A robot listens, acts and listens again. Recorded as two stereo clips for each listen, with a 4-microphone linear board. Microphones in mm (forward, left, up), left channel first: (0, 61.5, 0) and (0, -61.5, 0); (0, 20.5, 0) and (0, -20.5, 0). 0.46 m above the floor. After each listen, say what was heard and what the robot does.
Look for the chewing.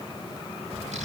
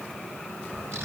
Keep listening.
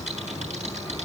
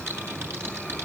Keep listening.
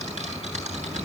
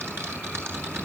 I can't make out chewing, only typing on a keyboard.